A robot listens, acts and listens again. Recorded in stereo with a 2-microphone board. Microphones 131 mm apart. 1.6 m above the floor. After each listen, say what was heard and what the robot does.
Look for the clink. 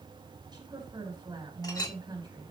The clink: about 35° left or 145° left. Turn 35° left.
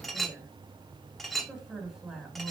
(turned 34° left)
Facing the clink, 1 to 2 m away.